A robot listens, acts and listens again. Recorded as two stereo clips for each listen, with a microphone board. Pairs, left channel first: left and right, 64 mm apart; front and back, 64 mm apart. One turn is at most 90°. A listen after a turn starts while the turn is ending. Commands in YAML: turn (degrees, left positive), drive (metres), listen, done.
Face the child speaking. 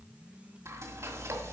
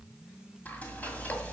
listen: true
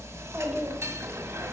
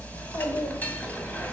done: "Found it: a child speaking, straight ahead."